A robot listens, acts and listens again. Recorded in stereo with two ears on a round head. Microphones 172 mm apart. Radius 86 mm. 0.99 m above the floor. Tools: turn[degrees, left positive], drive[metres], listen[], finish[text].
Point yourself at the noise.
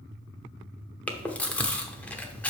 Action: turn[30]
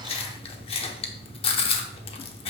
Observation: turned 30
Thought: So it is at 145° left.
Action: turn[145]
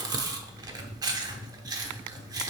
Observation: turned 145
Thought: The chewing is now 25° right.
Action: turn[-25]
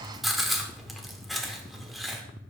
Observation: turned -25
Action: finish[Found it: chewing, straight ahead.]